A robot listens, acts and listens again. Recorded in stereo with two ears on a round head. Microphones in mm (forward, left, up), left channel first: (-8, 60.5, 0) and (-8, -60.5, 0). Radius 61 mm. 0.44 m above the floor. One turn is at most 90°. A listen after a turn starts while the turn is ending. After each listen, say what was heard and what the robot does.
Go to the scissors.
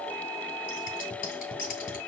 The scissors: about 70° left or 110° left. Turn 70° left.
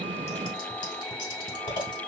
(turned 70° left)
So it is at 35° left. Turn 35° left.
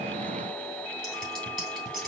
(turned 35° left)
Drive 1.0 m forward.
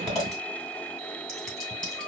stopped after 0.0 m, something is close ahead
Blocked. The scissors is further on, straight ahead.